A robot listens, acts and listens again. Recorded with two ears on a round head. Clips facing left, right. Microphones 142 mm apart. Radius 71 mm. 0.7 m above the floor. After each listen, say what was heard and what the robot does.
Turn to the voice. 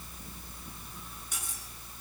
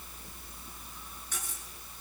Keep listening.
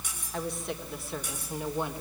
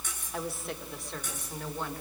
Keep listening.
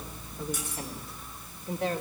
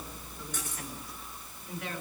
The woman speaking: about 30° left or 150° left. Turn 30° left.
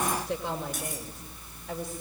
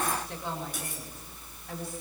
Keep listening.
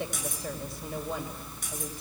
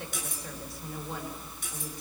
Keep listening.
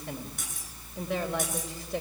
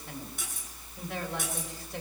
I heard a woman speaking, but can't make it out now. It was about straight ahead or 120° left.